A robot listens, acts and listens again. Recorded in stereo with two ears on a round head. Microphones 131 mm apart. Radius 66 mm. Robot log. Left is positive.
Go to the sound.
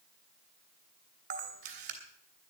note: The camera shutter: about 55° right or 125° right.
cmd yaw -55
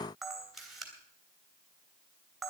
cmd fwd 1.0
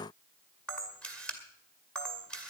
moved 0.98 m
note: The camera shutter is now 10° left.
cmd yaw +10
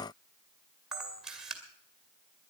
cmd fwd 1.0
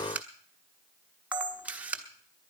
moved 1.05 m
note: The camera shutter is now 10° right.
cmd yaw -10
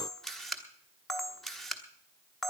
cmd fwd 1.0
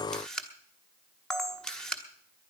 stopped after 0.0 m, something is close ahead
end: Arrived at the camera shutter, straight ahead.